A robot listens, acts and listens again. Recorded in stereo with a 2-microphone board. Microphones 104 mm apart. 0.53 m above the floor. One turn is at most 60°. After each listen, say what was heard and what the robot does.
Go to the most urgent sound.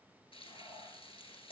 Keep listening.
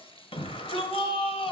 The shout: about 65° left or 115° left. Turn 60° left.
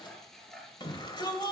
So it is at 50° left. Turn 50° left.
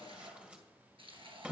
The shout is now 15° right. Turn 15° right.
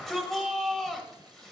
Drive 1.0 m forward.
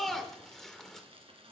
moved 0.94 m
Drive 1.0 m forward.
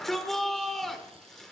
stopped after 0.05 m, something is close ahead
Arrived at the shout, straight ahead.